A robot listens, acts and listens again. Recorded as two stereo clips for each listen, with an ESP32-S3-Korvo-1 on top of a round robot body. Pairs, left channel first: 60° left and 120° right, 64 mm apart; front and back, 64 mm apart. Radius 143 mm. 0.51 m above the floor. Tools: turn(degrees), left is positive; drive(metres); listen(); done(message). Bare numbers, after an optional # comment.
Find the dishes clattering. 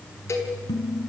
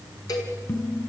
# The dishes clattering: 55° left.
turn(55)
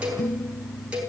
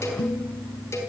done("Facing the dishes clattering, over 4 m away.")